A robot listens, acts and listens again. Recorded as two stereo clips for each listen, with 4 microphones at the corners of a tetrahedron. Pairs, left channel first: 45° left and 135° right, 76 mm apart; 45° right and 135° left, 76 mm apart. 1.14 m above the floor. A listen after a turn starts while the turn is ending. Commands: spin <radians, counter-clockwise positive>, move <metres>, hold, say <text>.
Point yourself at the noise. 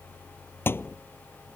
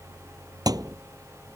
spin 1.83
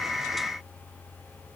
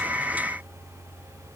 say Facing where the thud came from. I can't hear it now.